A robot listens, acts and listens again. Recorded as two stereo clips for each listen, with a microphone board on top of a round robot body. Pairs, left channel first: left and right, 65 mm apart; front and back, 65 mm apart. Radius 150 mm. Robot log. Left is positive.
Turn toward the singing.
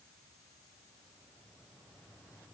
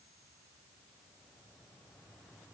cmd idle
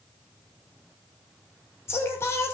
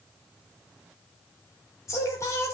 note: The singing: 45° left.
cmd yaw +45
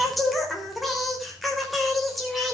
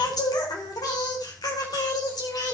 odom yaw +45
end: Facing the singing, over 4 m away.